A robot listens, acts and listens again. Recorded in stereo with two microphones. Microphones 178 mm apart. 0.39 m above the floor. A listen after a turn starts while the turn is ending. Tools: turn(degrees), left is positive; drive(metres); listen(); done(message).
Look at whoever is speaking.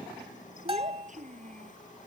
turn(degrees=-45)
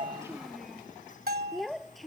done("Found it: a child speaking, straight ahead.")